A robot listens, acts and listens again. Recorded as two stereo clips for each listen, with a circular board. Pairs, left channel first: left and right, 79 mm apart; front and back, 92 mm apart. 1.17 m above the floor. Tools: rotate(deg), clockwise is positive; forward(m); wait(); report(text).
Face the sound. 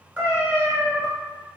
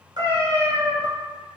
rotate(150)
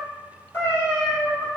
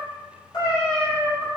rotate(-35)
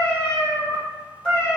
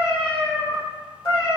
rotate(-15)
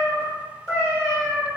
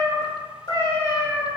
report("Facing the cat meowing, 2 to 4 m away.")